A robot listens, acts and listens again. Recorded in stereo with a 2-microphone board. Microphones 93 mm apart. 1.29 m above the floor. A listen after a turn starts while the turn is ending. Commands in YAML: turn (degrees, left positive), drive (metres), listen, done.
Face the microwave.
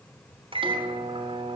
turn: -90
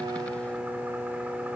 turn: -15
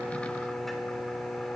done: "Facing the microwave."